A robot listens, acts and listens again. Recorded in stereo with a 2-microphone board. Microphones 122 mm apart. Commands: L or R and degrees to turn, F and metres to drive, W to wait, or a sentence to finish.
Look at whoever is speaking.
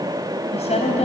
L60
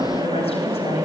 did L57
L60
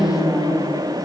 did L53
Found it: a woman speaking, straight ahead, 2 to 4 m away.